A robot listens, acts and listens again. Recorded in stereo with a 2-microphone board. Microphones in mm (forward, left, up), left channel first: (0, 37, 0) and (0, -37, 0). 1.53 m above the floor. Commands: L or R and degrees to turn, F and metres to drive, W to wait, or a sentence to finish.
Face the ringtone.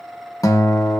W
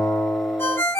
L35
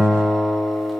W
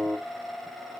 W
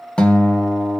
I heard a ringtone, but can't make it out now. It was about straight ahead or 110° left.